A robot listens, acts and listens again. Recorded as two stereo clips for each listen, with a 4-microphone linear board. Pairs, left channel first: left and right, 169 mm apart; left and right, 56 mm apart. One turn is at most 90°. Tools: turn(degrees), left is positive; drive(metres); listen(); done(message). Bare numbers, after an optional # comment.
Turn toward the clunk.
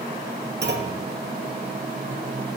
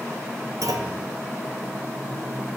turn(-90)
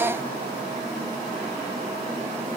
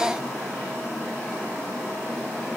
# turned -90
done("Facing where the clunk came from. I can't hear it now.")